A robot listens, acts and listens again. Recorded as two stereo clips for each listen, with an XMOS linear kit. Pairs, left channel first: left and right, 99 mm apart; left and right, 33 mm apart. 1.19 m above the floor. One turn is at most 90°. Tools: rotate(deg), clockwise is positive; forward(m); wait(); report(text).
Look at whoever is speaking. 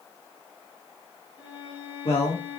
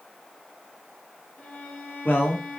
rotate(-90)
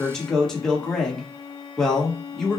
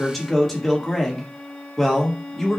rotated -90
report("Facing the man speaking.")